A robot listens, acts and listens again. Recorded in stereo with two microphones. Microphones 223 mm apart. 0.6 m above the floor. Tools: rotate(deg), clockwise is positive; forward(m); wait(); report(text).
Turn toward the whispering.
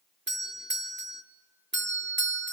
wait()
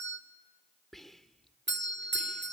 rotate(-30)
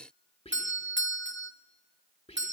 rotate(-150)
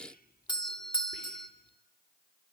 rotate(-45)
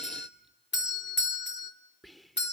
report("Found it: whispering, straight ahead.")